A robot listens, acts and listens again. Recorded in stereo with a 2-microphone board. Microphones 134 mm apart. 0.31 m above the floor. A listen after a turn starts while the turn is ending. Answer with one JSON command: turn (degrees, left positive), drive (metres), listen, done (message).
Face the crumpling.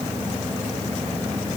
{"listen": true}
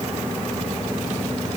{"listen": true}
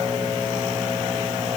{"done": "I can't make out crumpling to turn to."}